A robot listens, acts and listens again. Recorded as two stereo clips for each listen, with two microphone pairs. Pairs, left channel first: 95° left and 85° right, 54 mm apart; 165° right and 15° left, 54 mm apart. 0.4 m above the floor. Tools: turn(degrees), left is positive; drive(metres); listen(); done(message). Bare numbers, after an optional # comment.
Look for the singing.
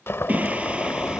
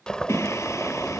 # The singing: 145° right.
turn(-145)
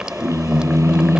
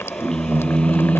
# The singing is now 95° right.
turn(-95)
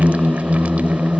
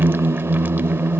# The singing is now 15° left.
turn(15)
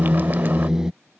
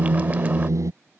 done("Facing the singing.")